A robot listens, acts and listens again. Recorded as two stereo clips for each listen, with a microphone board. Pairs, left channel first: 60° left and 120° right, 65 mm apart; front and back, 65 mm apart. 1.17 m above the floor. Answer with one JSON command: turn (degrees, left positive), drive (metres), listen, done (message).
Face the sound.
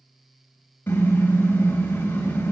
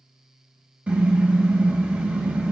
{"turn": 115}
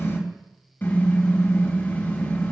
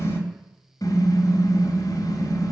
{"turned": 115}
{"done": "Facing the car horn, 2 to 4 m away."}